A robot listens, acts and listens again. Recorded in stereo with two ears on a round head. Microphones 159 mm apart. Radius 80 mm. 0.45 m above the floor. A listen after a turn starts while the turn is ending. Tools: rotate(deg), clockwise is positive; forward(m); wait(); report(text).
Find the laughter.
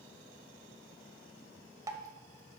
wait()
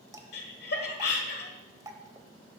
rotate(-60)
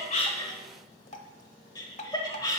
rotate(-25)
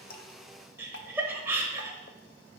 rotate(15)
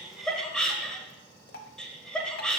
report("Found it: laughter, straight ahead.")